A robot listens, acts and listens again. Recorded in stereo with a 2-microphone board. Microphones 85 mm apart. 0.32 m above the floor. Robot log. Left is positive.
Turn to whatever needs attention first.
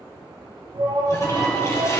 note: The shout: about 55° right or 125° right.
cmd yaw -55
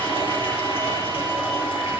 cmd idle
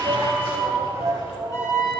note: So it is at 50° right.
cmd yaw -50
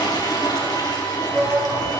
note: The shout is now 10° right.
cmd yaw -10
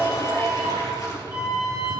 end: Facing the shout.